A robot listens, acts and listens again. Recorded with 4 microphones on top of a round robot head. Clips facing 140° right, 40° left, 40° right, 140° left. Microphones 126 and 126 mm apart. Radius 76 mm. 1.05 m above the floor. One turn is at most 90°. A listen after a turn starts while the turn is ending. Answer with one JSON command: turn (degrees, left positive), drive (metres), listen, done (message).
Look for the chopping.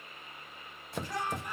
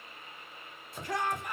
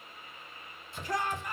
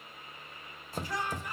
{"turn": -90}
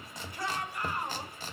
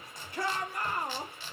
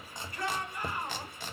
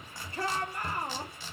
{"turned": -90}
{"turn": -85}
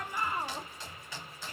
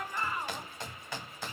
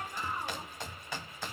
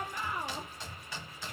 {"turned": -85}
{"done": "Facing the chopping."}